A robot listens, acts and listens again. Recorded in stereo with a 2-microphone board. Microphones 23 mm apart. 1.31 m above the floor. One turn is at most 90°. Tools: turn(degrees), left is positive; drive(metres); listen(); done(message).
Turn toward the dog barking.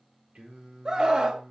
listen()
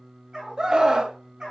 turn(degrees=-40)
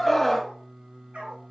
turn(degrees=-90)
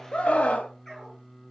turn(degrees=15)
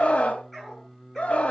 done("Facing the dog barking.")